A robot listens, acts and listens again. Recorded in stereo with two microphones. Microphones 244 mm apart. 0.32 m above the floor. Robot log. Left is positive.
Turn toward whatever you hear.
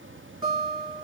note: The guitar: about 15° right or 165° right.
cmd yaw -15
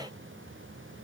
cmd idle
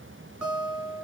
end: Found it: a guitar, straight ahead.